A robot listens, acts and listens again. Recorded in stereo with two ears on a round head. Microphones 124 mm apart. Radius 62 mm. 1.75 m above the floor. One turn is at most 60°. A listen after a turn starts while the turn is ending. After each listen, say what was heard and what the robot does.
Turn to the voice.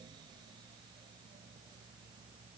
Keep listening.
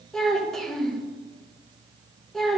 Turn 30° left.
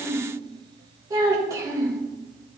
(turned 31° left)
So it is at 25° right. Turn 25° right.
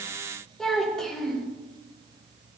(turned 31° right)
Facing the child speaking, 1 to 2 m away.